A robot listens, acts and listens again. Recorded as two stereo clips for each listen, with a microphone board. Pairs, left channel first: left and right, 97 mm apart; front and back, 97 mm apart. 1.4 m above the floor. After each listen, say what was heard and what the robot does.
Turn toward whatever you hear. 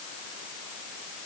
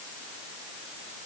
Keep listening.
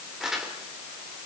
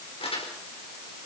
Facing the crumpling.